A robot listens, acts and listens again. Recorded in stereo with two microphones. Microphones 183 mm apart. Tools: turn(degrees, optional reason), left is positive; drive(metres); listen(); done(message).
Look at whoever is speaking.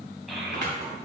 turn(degrees=30)
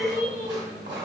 turn(degrees=135, reason="So it is at 135° left.")
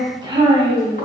turn(degrees=-30, reason="The child speaking is now 30° right.")
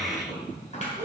turn(degrees=-15, reason="The child speaking is now 15° right.")
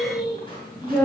turn(degrees=-10, reason="The child speaking is now 10° right.")
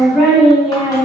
done("Facing the child speaking.")